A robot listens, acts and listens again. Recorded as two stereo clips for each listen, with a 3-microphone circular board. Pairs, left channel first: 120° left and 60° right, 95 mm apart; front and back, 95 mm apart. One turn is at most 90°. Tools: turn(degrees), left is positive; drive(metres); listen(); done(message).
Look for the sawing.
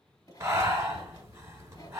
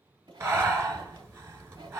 turn(degrees=90)
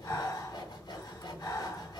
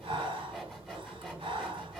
turn(degrees=85)
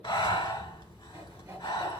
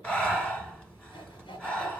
done("Facing the sawing, 1 to 2 m away.")